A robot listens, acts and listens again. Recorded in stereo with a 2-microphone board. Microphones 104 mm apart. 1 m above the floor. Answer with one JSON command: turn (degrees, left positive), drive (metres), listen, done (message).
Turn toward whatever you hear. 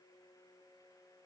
{"listen": true}
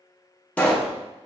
{"turn": 30}
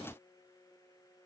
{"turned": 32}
{"listen": true}
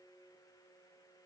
{"done": "I heard a pop, but can't make it out now. It was about 20° right or 135° left."}